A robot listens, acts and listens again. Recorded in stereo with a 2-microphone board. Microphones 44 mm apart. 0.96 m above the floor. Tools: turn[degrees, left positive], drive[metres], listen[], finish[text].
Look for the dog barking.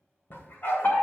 Thought: The dog barking: about 45° left or 135° left.
Action: turn[45]
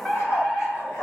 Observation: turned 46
Thought: So it is at 80° left.
Action: turn[80]
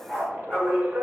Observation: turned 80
Thought: The dog barking is now 25° left.
Action: turn[25]
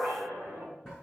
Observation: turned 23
Action: finish[Facing the dog barking.]